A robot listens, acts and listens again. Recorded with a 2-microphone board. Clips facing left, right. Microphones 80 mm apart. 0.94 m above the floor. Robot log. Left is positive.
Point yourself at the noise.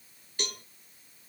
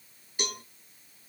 cmd yaw -30
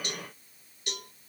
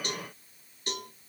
note: So it is at 140° right.
cmd yaw -140
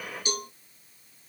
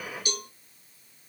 note: The cowbell is now 30° left.
cmd yaw +30
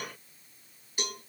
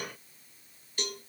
note: The cowbell is now 10° left.
cmd yaw +10
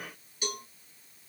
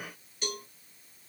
end: Found it: a cowbell, straight ahead, 2 to 4 m away.